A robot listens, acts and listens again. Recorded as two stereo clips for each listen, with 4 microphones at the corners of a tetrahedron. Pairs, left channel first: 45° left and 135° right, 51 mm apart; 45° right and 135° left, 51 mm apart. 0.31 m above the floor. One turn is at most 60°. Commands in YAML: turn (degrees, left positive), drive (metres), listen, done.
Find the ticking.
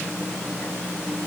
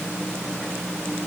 listen: true
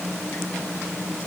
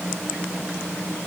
listen: true
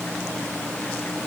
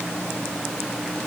done: "I can't make out ticking to turn to."